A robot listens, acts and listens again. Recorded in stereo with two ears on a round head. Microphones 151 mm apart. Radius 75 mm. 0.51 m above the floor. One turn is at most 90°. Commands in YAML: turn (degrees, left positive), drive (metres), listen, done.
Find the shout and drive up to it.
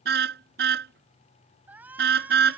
turn: -30
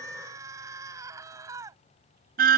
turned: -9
turn: -20
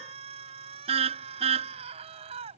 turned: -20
turn: -90
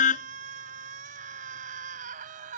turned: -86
turn: -55
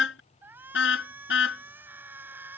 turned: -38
turn: -15
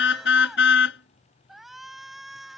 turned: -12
drive: 1.0
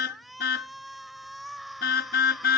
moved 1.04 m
drive: 1.0
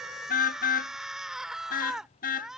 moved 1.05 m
drive: 1.0
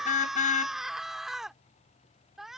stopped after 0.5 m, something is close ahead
done: "Arrived at the shout, straight ahead."